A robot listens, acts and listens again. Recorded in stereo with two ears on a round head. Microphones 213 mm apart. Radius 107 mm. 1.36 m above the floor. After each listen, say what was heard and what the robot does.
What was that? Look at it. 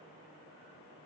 Keep listening.
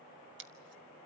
The scissors: about 50° right or 130° right. Turn 50° right.
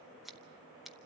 Facing the scissors, 1 to 2 m away.